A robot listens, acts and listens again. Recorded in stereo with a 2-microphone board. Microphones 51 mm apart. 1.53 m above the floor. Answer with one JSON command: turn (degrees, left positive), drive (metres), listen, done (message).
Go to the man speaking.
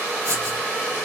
{"listen": true}
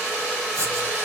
{"listen": true}
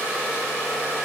{"done": "I can't make out a man speaking to turn to."}